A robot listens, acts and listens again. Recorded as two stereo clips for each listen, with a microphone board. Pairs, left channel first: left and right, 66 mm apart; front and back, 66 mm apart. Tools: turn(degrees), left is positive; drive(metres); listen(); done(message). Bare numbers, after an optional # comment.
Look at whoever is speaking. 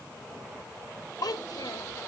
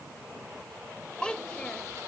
# The child speaking: 75° left.
turn(75)
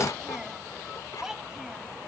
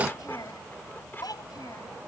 # The child speaking is now 10° right.
turn(-10)
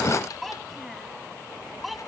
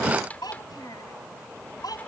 done("Found it: a child speaking, straight ahead.")